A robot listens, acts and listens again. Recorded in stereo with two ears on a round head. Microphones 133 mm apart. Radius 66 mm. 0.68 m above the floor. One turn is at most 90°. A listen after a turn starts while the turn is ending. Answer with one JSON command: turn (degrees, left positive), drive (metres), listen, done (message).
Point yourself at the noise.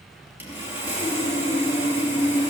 {"turn": -30}
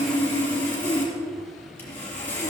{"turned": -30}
{"turn": 15}
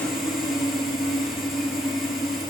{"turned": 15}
{"done": "Found it: sawing, straight ahead, 2 to 4 m away."}